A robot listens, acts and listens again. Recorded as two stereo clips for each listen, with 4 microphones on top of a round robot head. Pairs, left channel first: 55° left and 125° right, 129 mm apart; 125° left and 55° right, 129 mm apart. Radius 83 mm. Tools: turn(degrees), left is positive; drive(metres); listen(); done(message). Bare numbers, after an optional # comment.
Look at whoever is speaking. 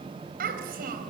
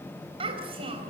# The child speaking: 105° right.
turn(-105)
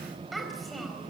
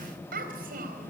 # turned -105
# The child speaking is now 35° right.
turn(-35)
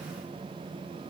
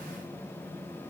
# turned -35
listen()
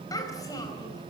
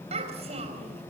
# The child speaking is now 10° right.
turn(-10)
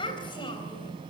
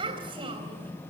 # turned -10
done("Found it: a child speaking, straight ahead.")